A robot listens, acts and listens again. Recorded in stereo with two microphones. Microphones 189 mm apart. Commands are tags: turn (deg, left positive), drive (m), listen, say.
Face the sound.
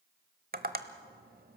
<turn deg="-55"/>
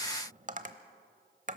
<turn deg="-55"/>
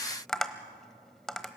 <say>Facing the tapping, 1 to 2 m away.</say>